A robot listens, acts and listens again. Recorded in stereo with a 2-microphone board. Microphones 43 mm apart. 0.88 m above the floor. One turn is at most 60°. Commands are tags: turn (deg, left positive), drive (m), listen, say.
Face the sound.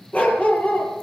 <turn deg="35"/>
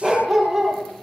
<say>Found it: a dog barking, straight ahead.</say>